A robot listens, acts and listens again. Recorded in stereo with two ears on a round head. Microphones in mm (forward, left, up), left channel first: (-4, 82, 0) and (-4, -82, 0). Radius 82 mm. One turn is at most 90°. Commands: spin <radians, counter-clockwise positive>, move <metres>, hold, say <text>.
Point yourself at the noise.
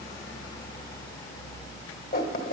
spin 0.87
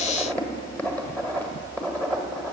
spin 0.17
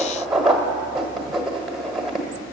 say Found it: writing, straight ahead, 1 to 2 m away.